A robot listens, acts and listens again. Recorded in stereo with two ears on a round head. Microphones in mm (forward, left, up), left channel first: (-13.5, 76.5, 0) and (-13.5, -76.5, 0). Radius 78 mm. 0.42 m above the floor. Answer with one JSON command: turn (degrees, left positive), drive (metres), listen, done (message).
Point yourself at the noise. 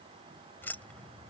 {"turn": 30}
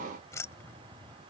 {"turn": 30}
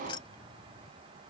{"turn": 155}
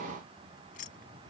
{"turn": 50}
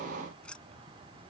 {"done": "Found it: keys jangling, straight ahead."}